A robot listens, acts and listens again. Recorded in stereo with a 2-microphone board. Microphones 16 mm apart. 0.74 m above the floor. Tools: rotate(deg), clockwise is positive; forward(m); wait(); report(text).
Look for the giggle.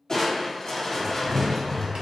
wait()
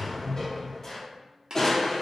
wait()
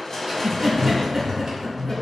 rotate(45)
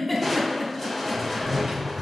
report("Found it: a giggle, straight ahead, under 1 m away.")